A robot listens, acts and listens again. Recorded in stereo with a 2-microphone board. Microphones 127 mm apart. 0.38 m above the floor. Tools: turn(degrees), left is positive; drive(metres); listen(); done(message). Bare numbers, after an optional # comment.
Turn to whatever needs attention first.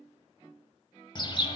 listen()
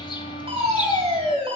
# The fire alarm: about 45° right or 135° right.
turn(-45)
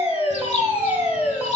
# So it is at 10° right.
turn(-10)
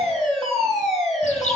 done("Facing the fire alarm, 2 to 4 m away.")